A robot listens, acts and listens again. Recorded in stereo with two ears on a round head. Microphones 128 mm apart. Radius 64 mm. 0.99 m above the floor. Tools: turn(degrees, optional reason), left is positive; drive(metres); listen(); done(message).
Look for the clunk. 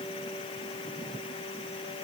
listen()
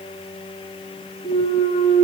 turn(degrees=45, reason="The clunk: about 45° left or 135° left.")
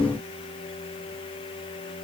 listen()
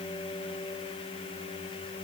done("I heard a clunk, but can't make it out now. It was about straight ahead or 90° left.")